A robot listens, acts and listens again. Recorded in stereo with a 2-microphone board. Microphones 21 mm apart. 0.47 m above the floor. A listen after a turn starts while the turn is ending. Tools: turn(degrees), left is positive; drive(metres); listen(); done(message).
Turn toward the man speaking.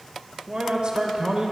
turn(degrees=-55)
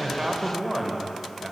turn(degrees=-20)
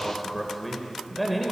done("Facing the man speaking, 1 to 2 m away.")